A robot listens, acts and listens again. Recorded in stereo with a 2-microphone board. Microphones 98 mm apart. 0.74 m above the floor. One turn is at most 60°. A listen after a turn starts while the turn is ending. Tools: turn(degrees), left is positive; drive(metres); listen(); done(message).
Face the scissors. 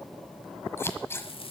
turn(degrees=25)
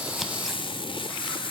listen()
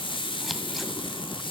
listen()
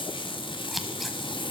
done("Found it: scissors, straight ahead.")